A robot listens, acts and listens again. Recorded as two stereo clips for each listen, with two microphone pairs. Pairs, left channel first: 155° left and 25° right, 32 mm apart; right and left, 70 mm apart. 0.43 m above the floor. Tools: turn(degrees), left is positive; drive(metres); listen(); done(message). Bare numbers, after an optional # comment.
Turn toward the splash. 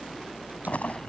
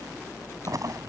# The splash: 120° left.
turn(120)
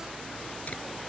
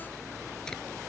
done("I heard a splash from this way, but can't make it out now.")